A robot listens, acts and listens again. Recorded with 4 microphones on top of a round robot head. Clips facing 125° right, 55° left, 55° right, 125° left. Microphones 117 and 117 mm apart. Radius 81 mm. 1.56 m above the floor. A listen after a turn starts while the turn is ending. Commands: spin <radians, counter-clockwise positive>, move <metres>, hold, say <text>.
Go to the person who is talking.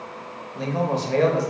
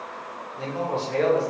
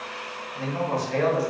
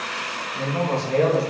spin -2.97
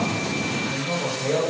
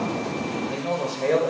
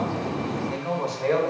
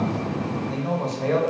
spin 0.61
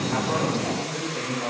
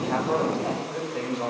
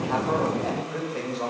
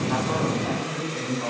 spin -0.17
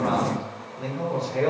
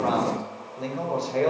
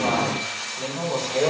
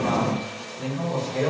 move 1.0
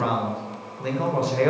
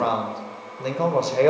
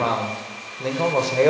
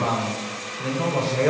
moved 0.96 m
move 1.0
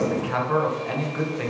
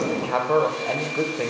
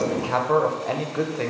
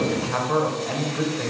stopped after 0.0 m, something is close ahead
say Arrived at the man speaking, straight ahead.